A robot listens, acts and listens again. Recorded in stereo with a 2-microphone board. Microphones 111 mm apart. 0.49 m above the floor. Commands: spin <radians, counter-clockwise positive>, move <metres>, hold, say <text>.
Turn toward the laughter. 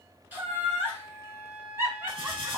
spin -0.44
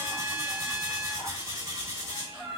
say Facing the laughter, 2 to 4 m away.